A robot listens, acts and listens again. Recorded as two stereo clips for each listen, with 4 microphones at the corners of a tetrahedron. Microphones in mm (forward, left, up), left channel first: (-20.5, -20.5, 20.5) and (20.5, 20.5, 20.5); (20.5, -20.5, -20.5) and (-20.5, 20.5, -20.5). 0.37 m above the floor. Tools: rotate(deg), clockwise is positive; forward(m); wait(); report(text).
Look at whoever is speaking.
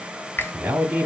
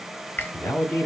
report("Facing the man speaking, 2 to 4 m away.")